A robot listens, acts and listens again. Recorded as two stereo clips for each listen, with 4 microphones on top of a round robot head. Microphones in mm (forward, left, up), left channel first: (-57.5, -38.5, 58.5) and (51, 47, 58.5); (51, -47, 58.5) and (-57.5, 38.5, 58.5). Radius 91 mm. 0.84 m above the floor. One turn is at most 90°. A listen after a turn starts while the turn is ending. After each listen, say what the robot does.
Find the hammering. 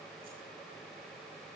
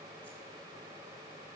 Keep listening.
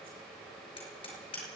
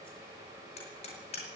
Turn 85° right.
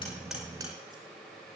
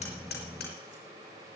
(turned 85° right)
Keep listening.
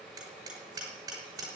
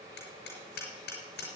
Turn 30° right.
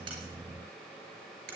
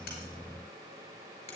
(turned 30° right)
Turn 15° left.
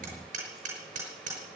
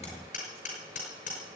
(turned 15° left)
Found it: hammering, straight ahead.